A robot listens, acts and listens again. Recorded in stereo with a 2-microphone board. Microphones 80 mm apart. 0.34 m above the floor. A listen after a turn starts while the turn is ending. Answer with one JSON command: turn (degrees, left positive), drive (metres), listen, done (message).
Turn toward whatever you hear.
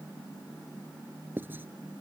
{"turn": -25}
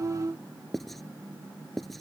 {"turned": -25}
{"done": "Found it: writing, straight ahead."}